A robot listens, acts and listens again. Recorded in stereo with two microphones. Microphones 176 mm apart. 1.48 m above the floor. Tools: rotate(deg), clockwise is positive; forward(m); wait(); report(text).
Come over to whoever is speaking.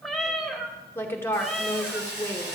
rotate(-30)
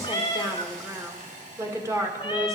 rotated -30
rotate(15)
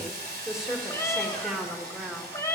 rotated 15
forward(1.0)
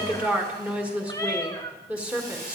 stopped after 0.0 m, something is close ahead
report("Blocked. The woman speaking is further on, straight ahead.")